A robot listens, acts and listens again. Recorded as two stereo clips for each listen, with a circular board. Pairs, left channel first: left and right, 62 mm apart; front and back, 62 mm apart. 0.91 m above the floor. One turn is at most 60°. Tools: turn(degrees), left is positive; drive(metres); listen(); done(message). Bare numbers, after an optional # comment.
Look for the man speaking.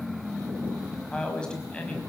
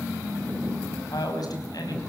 # The man speaking: 15° left.
turn(15)
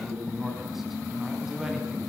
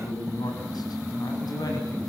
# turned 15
done("Found it: a man speaking, straight ahead, over 4 m away.")